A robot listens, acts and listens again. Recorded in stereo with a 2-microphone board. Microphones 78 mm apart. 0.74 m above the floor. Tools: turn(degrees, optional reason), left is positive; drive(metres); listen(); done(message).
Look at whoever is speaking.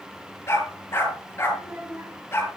turn(degrees=-30, reason="The child speaking: about 30° right or 150° right.")
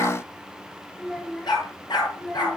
turn(degrees=10, reason="So it is at 10° left.")
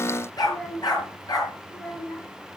turn(degrees=10, reason="The child speaking is now 10° left.")
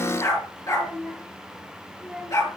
done("Facing the child speaking, over 4 m away.")